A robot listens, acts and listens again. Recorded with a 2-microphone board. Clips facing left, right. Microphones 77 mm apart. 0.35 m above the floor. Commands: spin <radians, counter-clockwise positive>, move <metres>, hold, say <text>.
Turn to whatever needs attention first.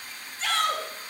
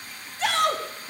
spin -1.13
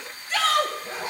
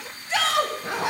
spin -0.44
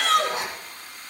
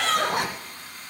say Found it: a shout, straight ahead, 2 to 4 m away.